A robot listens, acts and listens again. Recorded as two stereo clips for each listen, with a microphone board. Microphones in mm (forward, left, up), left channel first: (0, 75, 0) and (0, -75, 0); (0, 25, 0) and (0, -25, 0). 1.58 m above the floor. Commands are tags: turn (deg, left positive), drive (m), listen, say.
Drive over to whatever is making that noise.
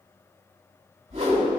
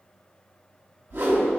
<turn deg="-45"/>
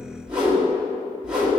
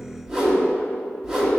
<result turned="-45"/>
<drive m="1.0"/>
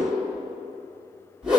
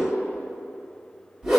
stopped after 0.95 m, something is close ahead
<turn deg="-10"/>
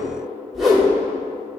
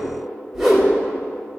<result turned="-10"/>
<say>I am next to the whoosh.</say>